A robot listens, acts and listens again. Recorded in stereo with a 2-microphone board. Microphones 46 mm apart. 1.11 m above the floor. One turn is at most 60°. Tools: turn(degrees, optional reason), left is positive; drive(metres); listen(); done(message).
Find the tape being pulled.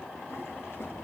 listen()
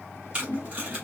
turn(degrees=-25, reason="The tape being pulled: about 25° right or 155° right.")
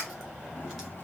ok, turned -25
listen()
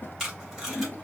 done("Found it: tape being pulled, straight ahead, 2 to 4 m away.")